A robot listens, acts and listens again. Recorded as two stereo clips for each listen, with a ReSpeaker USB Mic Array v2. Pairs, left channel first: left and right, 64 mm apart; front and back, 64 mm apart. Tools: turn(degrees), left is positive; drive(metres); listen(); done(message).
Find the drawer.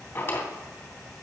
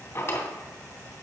turn(degrees=50)
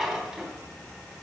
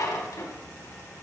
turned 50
done("Facing the drawer.")